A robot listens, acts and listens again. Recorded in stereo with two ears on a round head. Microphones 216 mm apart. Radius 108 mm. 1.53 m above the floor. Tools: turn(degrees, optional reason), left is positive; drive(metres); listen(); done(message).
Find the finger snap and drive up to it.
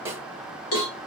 listen()
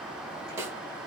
listen()
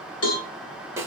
done("I can't make out a finger snap to turn to.")